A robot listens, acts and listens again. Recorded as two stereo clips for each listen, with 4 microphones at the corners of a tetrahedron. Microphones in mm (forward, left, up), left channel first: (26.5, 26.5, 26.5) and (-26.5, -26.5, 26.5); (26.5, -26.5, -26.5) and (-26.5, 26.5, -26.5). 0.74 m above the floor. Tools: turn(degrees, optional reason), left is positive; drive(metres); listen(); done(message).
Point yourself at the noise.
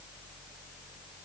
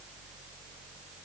listen()
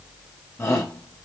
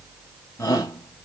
done("Found it: a shout, straight ahead.")